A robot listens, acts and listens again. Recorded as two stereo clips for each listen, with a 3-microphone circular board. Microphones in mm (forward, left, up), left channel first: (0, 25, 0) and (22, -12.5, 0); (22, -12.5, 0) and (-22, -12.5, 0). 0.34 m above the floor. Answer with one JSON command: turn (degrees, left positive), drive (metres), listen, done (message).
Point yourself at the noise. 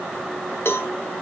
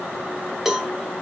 {"turn": 100}
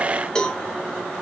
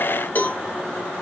{"turn": 45}
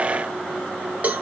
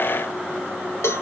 {"done": "Facing the cowbell, under 1 m away."}